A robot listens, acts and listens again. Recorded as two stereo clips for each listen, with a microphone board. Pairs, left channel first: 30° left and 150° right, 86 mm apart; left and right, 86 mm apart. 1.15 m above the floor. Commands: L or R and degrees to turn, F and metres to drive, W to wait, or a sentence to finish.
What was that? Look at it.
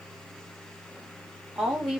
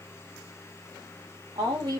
R65
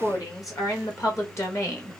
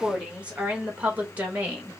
R20
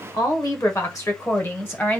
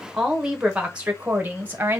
R30
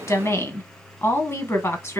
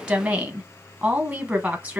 R15
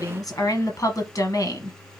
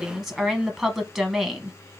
Facing the woman speaking, 1 to 2 m away.